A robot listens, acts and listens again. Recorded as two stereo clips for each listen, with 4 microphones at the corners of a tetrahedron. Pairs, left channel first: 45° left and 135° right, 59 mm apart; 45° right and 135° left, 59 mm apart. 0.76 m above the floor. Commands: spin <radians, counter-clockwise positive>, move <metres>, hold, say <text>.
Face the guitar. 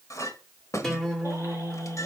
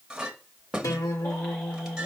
spin -0.70
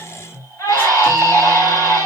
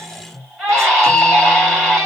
say Found it: a guitar, straight ahead.